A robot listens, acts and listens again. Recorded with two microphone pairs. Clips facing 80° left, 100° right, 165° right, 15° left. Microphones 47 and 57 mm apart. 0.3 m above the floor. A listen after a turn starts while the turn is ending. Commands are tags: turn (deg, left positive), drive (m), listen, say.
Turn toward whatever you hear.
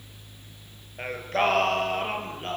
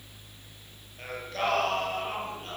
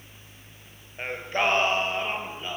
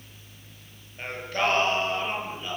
<turn deg="120"/>
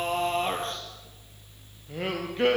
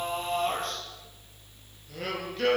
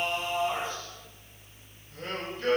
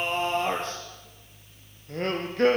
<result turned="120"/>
<turn deg="15"/>
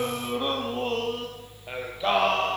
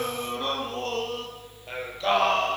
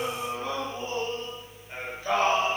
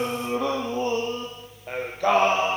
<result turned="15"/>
<say>Facing the singing.</say>